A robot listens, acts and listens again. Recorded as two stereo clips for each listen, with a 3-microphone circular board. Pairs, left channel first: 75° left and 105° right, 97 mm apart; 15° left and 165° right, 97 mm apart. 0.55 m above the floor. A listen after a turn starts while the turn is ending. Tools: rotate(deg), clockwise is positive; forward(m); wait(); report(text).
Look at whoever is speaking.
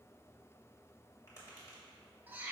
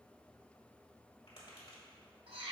wait()
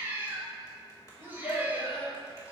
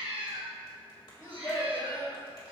rotate(-65)
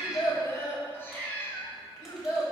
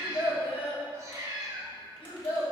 rotate(-20)
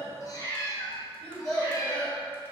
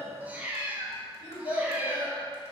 report("Found it: a child speaking, straight ahead, 2 to 4 m away.")